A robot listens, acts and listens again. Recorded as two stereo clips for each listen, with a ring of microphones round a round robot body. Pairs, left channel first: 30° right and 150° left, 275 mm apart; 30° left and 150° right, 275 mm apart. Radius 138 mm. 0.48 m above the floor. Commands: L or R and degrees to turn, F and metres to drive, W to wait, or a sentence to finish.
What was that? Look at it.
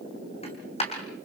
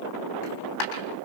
L40
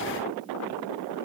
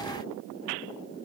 Facing where the dropped coin came from. I can't hear it now.